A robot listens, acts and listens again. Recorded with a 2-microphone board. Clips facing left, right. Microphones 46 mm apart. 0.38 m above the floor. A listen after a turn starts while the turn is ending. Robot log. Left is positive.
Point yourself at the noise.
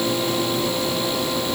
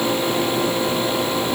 cmd idle
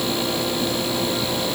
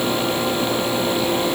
cmd idle
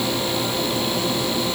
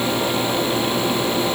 end: I can't make out anything to turn to.